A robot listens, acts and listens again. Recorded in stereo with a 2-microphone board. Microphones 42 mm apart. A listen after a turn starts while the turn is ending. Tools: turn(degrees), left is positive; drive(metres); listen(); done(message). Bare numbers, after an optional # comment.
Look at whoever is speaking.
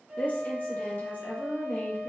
# The woman speaking: about 45° left or 135° left.
turn(45)
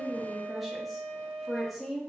done("Facing the woman speaking.")